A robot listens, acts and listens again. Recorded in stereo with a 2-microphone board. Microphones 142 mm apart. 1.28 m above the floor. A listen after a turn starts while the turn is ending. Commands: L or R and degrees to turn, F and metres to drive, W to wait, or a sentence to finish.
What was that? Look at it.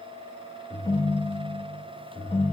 L30
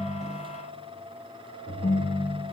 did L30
L115
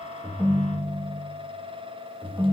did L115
R25
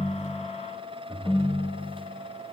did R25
Found it: a ringtone, straight ahead.